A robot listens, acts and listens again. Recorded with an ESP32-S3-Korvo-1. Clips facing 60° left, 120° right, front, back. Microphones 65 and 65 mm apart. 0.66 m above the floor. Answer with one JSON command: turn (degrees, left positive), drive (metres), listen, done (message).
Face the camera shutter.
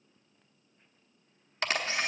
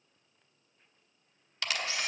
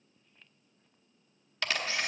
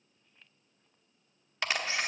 {"turn": 110}
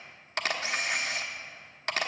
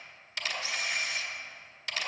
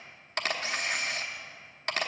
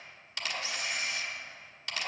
{"turn": 35}
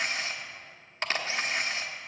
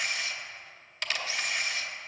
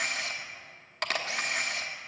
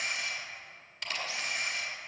{"turn": 10}
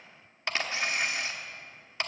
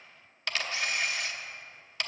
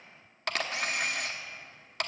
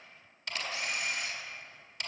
{"done": "Facing the camera shutter, under 1 m away."}